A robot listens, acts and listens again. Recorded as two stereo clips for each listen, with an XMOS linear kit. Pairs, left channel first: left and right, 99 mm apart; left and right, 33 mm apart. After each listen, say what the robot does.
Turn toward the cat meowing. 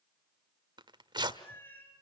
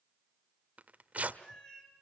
Turn 20° left.
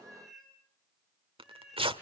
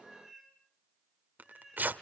Facing the cat meowing, over 4 m away.